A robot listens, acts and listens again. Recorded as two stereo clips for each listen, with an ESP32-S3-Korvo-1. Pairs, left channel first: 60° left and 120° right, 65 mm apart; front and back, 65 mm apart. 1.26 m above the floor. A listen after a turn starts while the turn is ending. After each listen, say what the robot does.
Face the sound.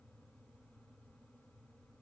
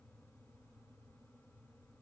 Keep listening.
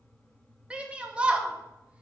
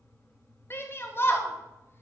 Turn 50° right.
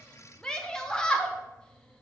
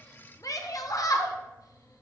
Turn 20° right.
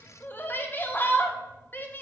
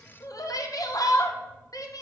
Found it: a shout, straight ahead, 1 to 2 m away.